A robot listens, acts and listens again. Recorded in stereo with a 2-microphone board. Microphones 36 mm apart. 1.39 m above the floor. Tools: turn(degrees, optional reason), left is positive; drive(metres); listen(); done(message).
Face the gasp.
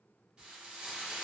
listen()
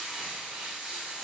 listen()
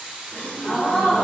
turn(degrees=50, reason="The gasp: about 50° left or 130° left.")
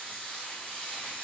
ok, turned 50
listen()
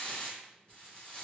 done("I heard a gasp, but can't make it out now. It was about straight ahead or 80° left.")